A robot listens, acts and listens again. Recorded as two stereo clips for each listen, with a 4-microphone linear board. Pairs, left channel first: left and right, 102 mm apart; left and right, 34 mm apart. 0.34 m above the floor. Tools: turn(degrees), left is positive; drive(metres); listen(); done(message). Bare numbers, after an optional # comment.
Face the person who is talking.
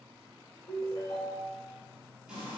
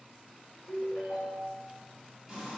listen()
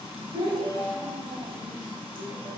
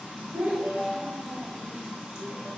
# The child speaking: about 45° right or 135° right.
turn(-45)
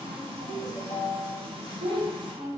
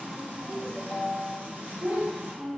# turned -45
# So it is at 75° right.
turn(-75)
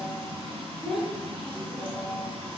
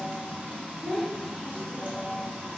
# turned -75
done("Facing the child speaking, under 1 m away.")